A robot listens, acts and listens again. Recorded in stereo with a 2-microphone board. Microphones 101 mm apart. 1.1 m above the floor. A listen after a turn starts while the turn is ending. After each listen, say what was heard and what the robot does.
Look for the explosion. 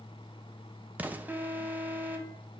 The explosion: about 15° right or 165° right. Turn 15° right.
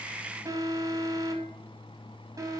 Keep listening.
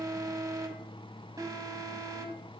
I heard an explosion, but can't make it out now. It was about straight ahead or 150° right.